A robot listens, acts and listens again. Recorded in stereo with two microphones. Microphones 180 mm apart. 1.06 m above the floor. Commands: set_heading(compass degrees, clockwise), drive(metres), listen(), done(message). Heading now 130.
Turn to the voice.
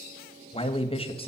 set_heading(100)
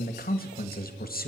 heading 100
set_heading(345)
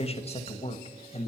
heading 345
set_heading(305)
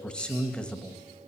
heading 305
done("Found it: a man speaking, straight ahead.")